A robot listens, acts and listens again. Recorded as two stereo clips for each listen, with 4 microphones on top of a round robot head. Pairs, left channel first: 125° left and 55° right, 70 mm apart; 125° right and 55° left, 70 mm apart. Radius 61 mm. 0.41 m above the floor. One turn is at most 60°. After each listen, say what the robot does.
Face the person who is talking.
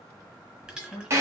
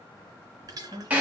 Turn 60° left.
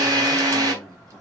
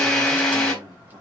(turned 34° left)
Turn 40° left.
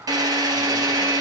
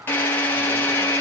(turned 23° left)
Turn 15° left.
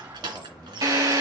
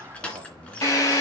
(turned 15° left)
Turn 25° left.
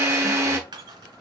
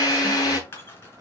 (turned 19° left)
Turn 25° left.
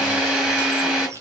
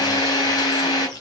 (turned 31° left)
Keep listening.
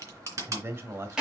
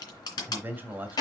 Facing the man speaking, 2 to 4 m away.